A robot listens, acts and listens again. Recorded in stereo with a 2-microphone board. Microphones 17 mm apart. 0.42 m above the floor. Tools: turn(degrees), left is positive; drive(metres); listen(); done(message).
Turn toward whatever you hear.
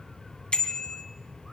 turn(degrees=75)
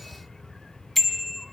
done("Facing the bicycle bell.")